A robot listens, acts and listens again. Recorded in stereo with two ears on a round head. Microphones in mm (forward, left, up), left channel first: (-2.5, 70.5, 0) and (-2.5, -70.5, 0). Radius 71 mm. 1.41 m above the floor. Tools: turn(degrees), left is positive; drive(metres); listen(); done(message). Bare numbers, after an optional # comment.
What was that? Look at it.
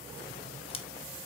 # The scissors: about 35° left or 145° left.
turn(35)
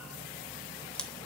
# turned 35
done("Facing the scissors.")